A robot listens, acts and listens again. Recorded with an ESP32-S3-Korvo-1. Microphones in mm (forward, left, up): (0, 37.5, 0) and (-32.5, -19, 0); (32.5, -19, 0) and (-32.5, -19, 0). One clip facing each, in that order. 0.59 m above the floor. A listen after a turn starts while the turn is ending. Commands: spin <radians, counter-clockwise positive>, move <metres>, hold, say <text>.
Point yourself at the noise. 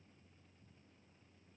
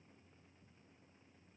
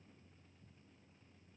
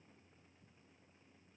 hold
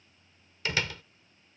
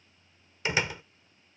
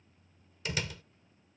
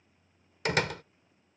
spin 3.05
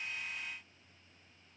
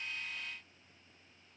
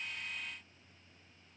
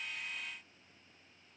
say I heard a door slam from this way, but can't make it out now.